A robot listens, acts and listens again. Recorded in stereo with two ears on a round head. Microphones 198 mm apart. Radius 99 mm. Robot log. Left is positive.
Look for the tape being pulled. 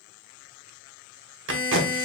note: The tape being pulled: about 60° right or 120° right.
cmd yaw -60
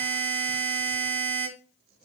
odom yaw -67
cmd idle
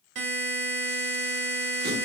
cmd idle
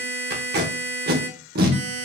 note: So it is at 50° right.
cmd yaw -50
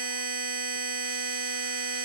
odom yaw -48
cmd idle
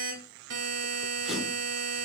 cmd idle
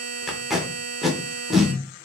end: Facing the tape being pulled.